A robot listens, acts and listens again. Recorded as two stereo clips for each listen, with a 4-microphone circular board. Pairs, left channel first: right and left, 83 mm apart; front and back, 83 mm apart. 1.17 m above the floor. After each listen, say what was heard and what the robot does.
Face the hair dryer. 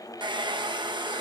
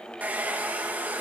The hair dryer: 110° left. Turn 110° left.
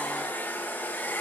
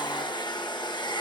The hair dryer is now 20° right. Turn 20° right.
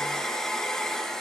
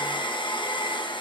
Facing the hair dryer, 1 to 2 m away.